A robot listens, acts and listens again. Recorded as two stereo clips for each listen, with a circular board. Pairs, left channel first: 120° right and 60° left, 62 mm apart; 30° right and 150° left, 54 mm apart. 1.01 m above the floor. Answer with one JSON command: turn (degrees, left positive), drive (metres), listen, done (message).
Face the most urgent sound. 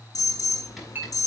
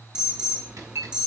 {"turn": -145}
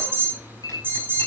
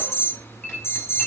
{"done": "Facing the alarm, over 4 m away."}